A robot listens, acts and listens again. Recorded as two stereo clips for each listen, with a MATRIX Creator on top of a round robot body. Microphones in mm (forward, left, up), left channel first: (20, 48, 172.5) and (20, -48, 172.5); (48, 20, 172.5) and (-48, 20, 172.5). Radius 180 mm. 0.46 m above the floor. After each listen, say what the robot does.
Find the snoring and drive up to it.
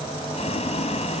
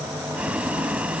Keep listening.
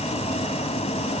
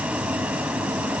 Keep listening.
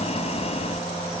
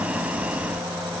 I can't make out snoring, only boiling.